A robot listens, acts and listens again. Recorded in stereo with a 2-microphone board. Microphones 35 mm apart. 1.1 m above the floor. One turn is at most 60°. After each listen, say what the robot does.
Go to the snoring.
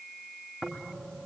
Turn 40° left.
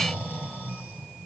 Turn 60° left.
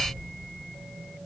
Turn 35° left.
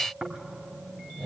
Turn 20° right.
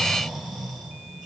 Drive 1.0 m forward.
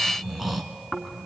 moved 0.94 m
Drive 1.0 m forward.
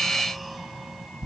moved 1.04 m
Drive 1.0 m forward.
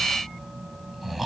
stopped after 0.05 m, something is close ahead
Arrived at the snoring, straight ahead.